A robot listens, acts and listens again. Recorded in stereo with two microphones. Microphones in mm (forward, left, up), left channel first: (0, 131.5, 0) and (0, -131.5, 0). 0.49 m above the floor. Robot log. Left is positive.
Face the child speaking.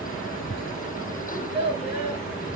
note: The child speaking: about 40° left or 140° left.
cmd yaw +40
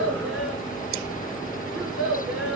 end: Facing the child speaking.